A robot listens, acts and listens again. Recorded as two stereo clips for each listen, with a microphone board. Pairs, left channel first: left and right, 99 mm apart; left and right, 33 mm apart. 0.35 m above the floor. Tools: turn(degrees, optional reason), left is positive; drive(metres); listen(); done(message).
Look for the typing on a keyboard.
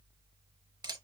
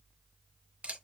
listen()
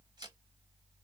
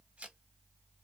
listen()
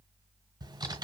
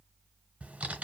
turn(degrees=-45, reason="The typing on a keyboard: about 45° right or 135° right.")
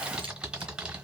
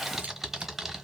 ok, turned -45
turn(degrees=-10, reason="So it is at 10° right.")
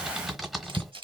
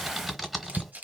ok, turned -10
done("Found it: typing on a keyboard, straight ahead.")